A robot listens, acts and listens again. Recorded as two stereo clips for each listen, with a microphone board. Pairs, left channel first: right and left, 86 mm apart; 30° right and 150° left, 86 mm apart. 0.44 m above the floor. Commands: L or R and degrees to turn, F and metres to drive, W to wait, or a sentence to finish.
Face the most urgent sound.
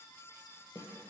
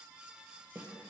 W
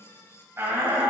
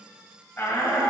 L30
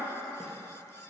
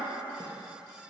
W
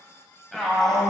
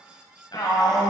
Facing the shout.